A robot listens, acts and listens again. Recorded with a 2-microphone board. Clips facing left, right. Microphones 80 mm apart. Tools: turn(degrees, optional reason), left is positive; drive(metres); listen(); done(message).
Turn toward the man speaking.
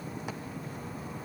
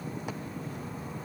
listen()
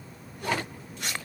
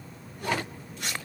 listen()
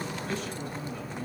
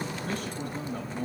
turn(degrees=-50, reason="The man speaking: about 50° right or 130° right.")
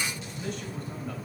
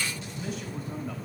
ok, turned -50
listen()
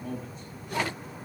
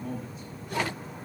done("Facing the man speaking.")